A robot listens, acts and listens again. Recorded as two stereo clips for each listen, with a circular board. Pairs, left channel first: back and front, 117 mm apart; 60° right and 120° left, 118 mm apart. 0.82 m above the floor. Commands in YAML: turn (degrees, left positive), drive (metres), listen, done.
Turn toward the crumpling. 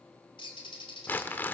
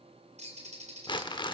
turn: -105
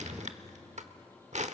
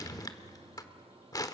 done: "Facing the crumpling, 1 to 2 m away."